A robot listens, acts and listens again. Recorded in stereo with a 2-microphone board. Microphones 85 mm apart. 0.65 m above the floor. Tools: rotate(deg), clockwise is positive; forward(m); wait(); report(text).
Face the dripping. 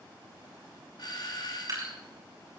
rotate(45)
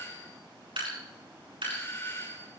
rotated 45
rotate(90)
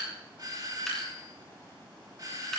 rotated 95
report("Found it: dripping, straight ahead, over 4 m away.")